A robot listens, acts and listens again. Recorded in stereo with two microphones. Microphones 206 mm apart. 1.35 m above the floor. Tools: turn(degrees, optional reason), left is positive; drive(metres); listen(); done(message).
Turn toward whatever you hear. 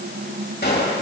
turn(degrees=55, reason="The gunshot: about 55° left or 125° left.")
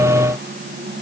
listen()
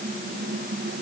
done("I heard a gunshot, but can't make it out now. It was about straight ahead or 70° left.")